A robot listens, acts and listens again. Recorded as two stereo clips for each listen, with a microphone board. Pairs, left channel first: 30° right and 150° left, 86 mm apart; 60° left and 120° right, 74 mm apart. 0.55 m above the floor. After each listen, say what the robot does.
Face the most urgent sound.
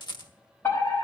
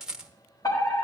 Turn 30° left.
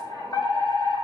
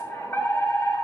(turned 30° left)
Facing the fire alarm.